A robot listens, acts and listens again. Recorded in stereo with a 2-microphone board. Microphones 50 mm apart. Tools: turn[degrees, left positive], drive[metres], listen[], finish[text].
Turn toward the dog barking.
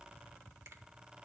Action: listen[]
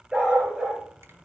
Thought: The dog barking: about 20° right or 160° right.
Action: turn[-20]
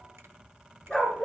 Thought: So it is at 15° left.
Action: turn[15]
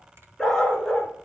Thought: The dog barking is now 15° left.
Action: turn[15]
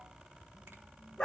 Thought: The dog barking is now 15° left.
Action: turn[15]
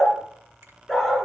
Action: finish[Facing the dog barking, 1 to 2 m away.]